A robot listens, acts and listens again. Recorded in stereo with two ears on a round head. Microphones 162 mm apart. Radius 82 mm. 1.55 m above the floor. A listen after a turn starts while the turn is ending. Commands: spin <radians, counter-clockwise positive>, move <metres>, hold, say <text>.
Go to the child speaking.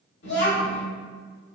spin 1.05
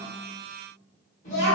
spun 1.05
spin 0.79
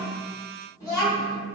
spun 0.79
spin 0.35
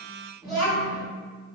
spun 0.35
move 1.0
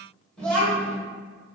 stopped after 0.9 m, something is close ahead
say I am next to the child speaking.